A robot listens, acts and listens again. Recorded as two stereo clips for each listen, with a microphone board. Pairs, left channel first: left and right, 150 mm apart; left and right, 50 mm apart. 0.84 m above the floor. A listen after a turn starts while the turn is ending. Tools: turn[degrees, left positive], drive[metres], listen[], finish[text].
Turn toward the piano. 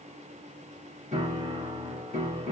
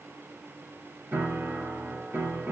Thought: The piano: about 50° right or 130° right.
Action: turn[-50]
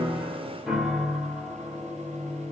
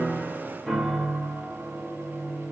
Action: finish[Found it: a piano, straight ahead, 1 to 2 m away.]